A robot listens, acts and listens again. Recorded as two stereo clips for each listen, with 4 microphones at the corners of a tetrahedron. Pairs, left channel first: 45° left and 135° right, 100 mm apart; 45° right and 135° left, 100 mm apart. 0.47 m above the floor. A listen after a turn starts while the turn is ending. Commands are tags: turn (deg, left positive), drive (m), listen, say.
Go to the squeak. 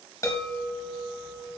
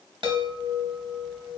<listen/>
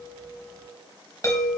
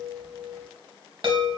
<listen/>
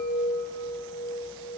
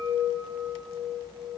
<say>I can't make out a squeak, only a chime.</say>